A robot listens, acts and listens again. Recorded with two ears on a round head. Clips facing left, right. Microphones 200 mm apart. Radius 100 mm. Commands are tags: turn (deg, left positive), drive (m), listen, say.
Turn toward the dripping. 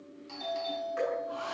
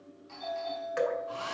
<turn deg="-90"/>
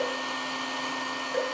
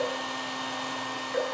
<listen/>
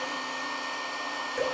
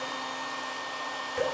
<listen/>
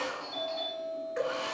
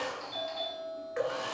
<say>Facing the dripping, 2 to 4 m away.</say>